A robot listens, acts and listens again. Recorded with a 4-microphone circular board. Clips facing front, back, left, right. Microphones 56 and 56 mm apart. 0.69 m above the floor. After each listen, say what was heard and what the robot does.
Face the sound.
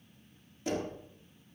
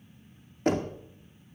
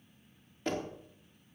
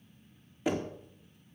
The knocking: 165° right. Turn 165° right.
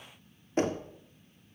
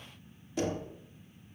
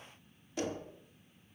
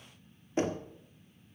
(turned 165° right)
The knocking is now 40° right. Turn 40° right.
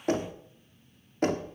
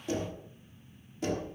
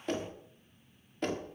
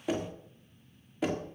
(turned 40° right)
Found it: knocking, straight ahead.